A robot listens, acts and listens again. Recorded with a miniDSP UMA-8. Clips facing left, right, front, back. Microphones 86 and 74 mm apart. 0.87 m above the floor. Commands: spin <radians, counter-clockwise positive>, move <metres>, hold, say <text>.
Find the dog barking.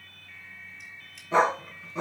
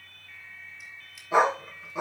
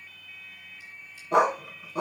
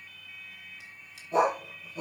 spin -0.17
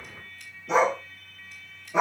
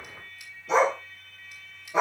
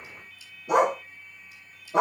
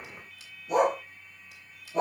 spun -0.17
say Found it: a dog barking, straight ahead, 2 to 4 m away.